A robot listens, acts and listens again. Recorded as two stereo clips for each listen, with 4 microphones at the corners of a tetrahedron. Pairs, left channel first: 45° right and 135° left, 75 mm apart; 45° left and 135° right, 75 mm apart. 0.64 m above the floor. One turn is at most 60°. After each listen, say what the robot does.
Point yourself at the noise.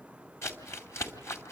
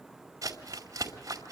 Turn 60° right.
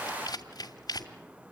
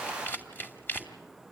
Turn 15° right.
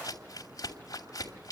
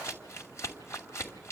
Facing the crumpling, 2 to 4 m away.